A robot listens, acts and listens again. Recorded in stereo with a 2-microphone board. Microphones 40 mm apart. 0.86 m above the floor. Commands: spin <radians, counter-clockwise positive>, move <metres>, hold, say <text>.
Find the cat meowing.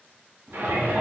spin -0.26
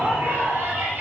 hold
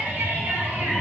spin 0.44
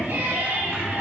spin 0.17
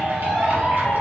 spin 0.17
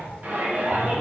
spin 0.17
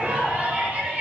hold
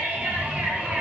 say Found it: a cat meowing, straight ahead.